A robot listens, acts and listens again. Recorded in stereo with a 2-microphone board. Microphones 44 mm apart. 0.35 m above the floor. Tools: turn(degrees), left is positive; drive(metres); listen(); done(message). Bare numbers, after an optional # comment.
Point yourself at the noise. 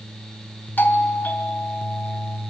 # The doorbell: about 45° left or 135° left.
turn(45)
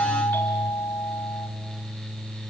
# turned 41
# So it is at 80° left.
turn(80)
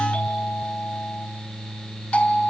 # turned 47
# The doorbell is now 35° left.
turn(35)
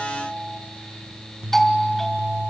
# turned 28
# The doorbell is now 10° left.
turn(10)
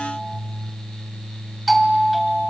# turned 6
done("Facing the doorbell, 2 to 4 m away.")